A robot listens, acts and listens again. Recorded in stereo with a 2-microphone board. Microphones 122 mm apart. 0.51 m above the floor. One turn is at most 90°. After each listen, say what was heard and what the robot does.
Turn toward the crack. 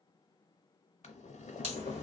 The crack: about 60° right or 120° right. Turn 60° right.
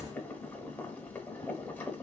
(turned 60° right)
So it is at 35° right. Turn 35° right.
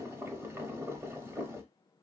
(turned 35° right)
I heard a crack from this way, but can't make it out now.